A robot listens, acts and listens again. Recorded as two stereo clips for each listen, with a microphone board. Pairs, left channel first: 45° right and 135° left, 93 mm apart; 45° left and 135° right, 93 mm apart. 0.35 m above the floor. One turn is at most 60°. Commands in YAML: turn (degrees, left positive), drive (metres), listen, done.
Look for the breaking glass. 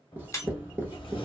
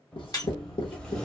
done: "Facing the breaking glass."